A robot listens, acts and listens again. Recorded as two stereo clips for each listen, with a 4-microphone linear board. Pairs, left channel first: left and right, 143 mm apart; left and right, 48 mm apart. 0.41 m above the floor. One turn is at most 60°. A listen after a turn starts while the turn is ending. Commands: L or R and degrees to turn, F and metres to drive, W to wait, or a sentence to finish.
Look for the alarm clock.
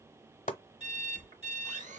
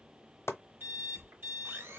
R50
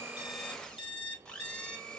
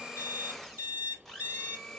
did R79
R50
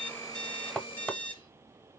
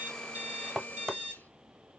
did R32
R20
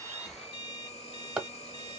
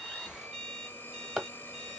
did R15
W
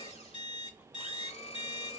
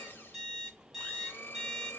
Found it: an alarm clock, straight ahead, 2 to 4 m away.